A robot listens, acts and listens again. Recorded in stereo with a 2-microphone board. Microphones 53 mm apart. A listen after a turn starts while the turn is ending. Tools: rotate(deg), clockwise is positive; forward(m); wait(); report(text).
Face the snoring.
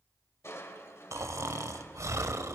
rotate(75)
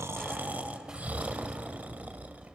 rotate(30)
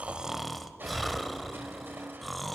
report("Found it: snoring, straight ahead, 1 to 2 m away.")